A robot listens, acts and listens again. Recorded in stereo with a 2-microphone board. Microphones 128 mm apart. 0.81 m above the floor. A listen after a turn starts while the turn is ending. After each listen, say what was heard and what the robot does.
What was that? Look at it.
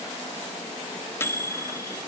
The microwave: about 20° left or 160° left. Turn 20° left.
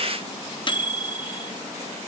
So it is at 140° left. Turn 140° left.
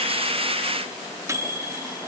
The microwave is now 25° right. Turn 25° right.
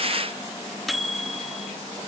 Facing the microwave, under 1 m away.